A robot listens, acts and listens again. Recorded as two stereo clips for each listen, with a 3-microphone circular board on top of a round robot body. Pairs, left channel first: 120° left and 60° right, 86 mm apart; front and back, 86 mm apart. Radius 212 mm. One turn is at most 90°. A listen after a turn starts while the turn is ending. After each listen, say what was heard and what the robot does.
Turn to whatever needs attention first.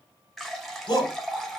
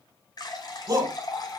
The shout: 145° left. Turn 90° left.
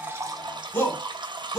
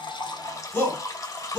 The shout is now 65° left. Turn 65° left.
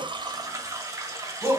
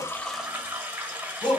Facing the shout, 2 to 4 m away.